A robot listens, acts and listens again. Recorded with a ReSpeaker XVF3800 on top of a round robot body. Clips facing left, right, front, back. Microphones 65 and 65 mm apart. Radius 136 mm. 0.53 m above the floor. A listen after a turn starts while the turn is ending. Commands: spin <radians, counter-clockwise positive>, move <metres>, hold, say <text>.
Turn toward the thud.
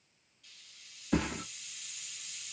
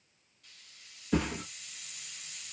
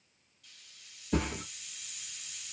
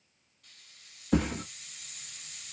spin 2.97
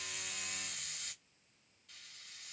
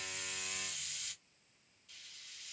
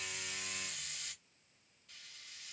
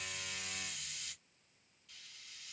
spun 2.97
say I heard a thud from this way, but can't make it out now.